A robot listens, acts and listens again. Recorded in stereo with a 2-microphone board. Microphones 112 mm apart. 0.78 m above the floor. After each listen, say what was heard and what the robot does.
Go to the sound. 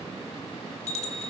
Turn 90° left.
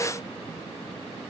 Keep listening.
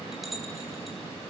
Drive 1.0 m forward.
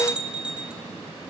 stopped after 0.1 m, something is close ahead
The bell is now 10° right. Turn 10° right.
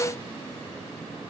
Keep listening.
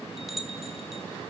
Blocked. The bell is further on, straight ahead.